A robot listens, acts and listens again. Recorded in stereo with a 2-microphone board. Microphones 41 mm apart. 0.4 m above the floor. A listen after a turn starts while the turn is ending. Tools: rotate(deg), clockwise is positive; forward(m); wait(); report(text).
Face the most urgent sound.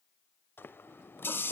wait()
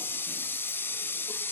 wait()
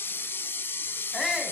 rotate(30)
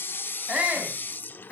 rotate(150)
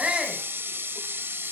wait()
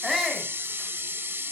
report("Found it: a shout, straight ahead, 2 to 4 m away.")